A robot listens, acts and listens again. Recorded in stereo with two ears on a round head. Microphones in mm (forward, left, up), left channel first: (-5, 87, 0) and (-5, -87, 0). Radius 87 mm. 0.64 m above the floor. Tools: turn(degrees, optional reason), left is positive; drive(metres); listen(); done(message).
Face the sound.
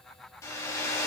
turn(degrees=15, reason="The hair dryer: about 15° left or 165° left.")
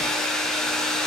done("Found it: a hair dryer, straight ahead, 2 to 4 m away.")